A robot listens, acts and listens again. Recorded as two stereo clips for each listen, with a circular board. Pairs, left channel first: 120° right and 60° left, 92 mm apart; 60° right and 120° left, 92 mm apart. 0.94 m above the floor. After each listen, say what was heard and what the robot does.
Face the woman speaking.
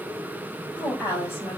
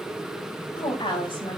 The woman speaking: 55° right. Turn 55° right.
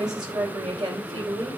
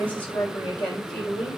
The woman speaking is now 20° left. Turn 20° left.
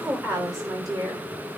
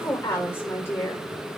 Found it: a woman speaking, straight ahead.